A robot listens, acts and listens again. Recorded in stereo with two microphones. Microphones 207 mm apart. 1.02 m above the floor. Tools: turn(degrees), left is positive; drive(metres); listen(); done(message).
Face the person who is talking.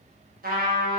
listen()
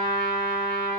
listen()
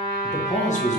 turn(degrees=35)
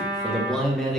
done("Found it: a man speaking, straight ahead, under 1 m away.")